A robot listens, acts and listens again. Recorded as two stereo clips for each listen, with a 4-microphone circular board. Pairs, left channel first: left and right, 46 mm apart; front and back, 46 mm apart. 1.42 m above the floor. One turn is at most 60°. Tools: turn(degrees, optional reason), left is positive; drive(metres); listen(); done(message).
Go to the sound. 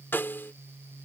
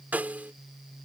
turn(degrees=60, reason="The snare drum: 125° left.")
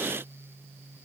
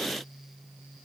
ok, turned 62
turn(degrees=60, reason="Nothing new. It was at 65° left.")
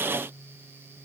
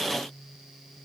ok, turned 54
turn(degrees=10, reason="Nothing new. It was at 10° left.")
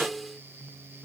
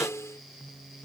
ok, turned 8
drive(metres=1.0)
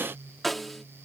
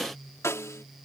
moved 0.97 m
drive(metres=1.0)
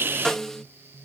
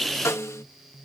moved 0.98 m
turn(degrees=10, reason="The snare drum is now 10° left.")
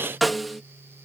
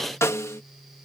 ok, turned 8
drive(metres=1.0)
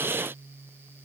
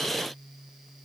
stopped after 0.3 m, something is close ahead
listen()
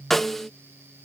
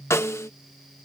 done("I am next to the snare drum.")